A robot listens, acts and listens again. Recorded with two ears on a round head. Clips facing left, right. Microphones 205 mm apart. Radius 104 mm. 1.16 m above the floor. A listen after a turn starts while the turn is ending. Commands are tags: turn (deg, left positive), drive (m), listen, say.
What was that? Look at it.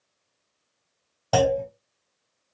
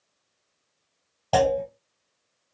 <turn deg="15"/>
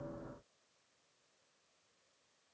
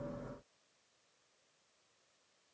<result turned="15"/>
<listen/>
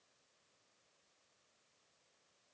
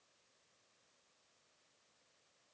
<say>I heard a clunk, but can't make it out now. It was about straight ahead or 150° left.</say>